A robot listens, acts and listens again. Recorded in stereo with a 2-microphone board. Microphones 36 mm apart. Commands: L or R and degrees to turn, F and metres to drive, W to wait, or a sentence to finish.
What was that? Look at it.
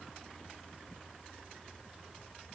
W
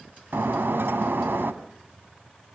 R90
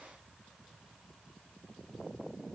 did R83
Facing where the breaking glass came from. I can't hear it now.